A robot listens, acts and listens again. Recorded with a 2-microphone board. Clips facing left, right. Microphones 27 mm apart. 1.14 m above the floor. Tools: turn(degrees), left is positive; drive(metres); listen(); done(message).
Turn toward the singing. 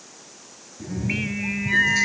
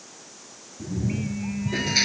turn(degrees=70)
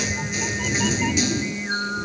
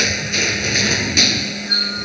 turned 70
turn(degrees=10)
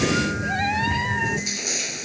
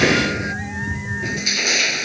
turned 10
listen()
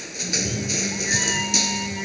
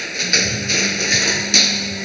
listen()
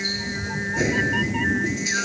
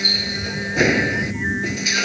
done("Facing where the singing came from. I can't hear it now.")